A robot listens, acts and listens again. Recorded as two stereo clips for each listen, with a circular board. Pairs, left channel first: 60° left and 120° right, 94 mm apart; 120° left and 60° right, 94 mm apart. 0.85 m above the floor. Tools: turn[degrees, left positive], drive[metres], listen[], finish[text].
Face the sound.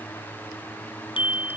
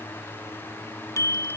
Thought: The bicycle bell: 65° left.
Action: turn[65]
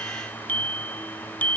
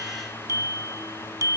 Thought: The bicycle bell is now 10° right.
Action: turn[-10]
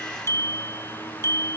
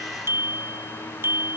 Action: finish[Facing the bicycle bell.]